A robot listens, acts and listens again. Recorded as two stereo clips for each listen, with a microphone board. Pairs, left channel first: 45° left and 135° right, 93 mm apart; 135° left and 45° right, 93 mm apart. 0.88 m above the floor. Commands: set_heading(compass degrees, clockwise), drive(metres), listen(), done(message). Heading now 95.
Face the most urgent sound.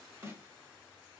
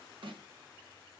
listen()
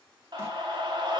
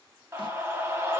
set_heading(200)
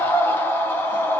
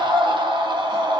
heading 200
set_heading(220)
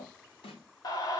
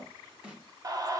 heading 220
done("Found it: a scream, straight ahead, under 1 m away.")